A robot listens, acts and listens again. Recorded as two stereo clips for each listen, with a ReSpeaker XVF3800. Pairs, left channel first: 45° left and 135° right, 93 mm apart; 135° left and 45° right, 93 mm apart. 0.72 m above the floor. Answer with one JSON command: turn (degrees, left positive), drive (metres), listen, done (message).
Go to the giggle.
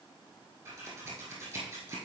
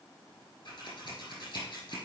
{"listen": true}
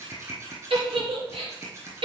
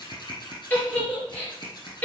{"turn": -155}
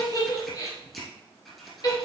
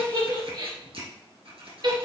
{"drive": 1.0}
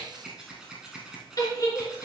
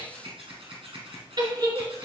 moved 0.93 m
{"drive": 1.0}
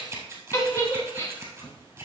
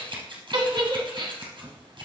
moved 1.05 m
{"turn": -10}
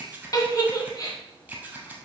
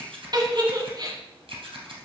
{"drive": 1.0}
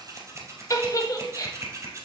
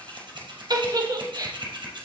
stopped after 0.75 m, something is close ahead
{"done": "I am next to the giggle."}